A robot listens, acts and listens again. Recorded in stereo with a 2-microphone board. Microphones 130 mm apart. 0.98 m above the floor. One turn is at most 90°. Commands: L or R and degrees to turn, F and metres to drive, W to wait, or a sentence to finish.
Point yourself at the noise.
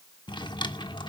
L35
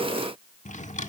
L90
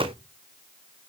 L20
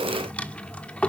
L10
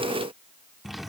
Facing the drawer, 1 to 2 m away.